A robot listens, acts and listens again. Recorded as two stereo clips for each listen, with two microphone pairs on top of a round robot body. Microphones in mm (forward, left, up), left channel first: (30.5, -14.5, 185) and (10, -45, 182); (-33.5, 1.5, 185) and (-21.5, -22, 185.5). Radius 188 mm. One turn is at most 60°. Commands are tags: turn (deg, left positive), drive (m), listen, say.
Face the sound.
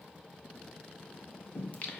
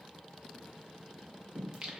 <say>Found it: singing, straight ahead, 1 to 2 m away.</say>